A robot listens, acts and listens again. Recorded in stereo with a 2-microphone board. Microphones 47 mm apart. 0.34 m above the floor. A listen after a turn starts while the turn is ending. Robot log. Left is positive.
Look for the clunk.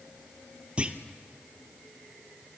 note: The clunk: about 25° right or 155° right.
cmd yaw -25
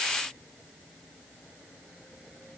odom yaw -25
cmd idle
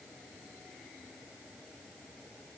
end: I heard a clunk, but can't make it out now. It was about straight ahead or 130° right.